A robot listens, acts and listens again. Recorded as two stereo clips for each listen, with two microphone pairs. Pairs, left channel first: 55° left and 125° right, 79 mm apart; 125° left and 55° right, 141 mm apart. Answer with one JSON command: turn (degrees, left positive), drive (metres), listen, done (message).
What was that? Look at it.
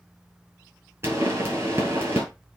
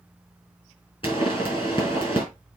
{"turn": 180}
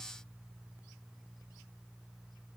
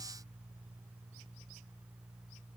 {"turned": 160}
{"turn": 20}
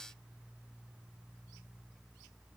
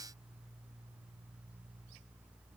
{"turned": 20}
{"done": "I heard a pop from this way, but can't make it out now."}